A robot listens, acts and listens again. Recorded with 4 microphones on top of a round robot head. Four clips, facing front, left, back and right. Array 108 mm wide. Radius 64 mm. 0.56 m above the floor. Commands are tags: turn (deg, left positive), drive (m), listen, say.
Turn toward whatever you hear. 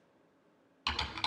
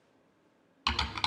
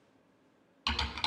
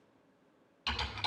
<turn deg="90"/>
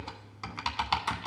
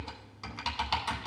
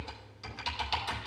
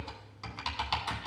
<say>Facing the typing on a keyboard.</say>